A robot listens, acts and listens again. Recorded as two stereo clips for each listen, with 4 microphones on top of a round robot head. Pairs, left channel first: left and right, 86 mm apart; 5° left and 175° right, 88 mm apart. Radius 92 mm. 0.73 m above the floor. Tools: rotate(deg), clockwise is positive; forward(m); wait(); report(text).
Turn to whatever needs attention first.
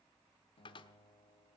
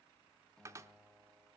wait()
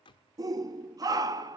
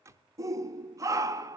rotate(125)
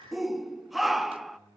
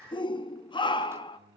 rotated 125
report("Found it: a shout, straight ahead, 1 to 2 m away.")